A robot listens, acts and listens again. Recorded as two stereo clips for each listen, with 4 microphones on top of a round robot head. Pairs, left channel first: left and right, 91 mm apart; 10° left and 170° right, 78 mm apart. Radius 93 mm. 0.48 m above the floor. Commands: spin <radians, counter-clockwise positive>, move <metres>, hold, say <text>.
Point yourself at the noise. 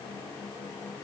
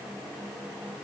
hold
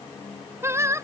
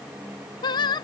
spin -0.52
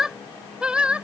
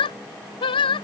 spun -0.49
spin -0.17
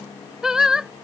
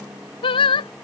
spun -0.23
say Found it: singing, straight ahead.